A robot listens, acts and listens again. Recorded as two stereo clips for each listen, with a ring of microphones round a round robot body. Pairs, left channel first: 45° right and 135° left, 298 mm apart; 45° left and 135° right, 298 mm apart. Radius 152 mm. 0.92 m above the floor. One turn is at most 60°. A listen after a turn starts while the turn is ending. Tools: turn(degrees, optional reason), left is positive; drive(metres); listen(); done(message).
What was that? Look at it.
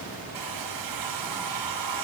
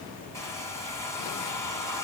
turn(degrees=60, reason="The hair dryer: 125° left.")
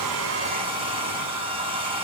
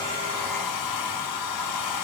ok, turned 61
turn(degrees=60, reason="The hair dryer is now 60° left.")
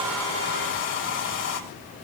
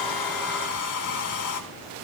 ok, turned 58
done("Facing the hair dryer.")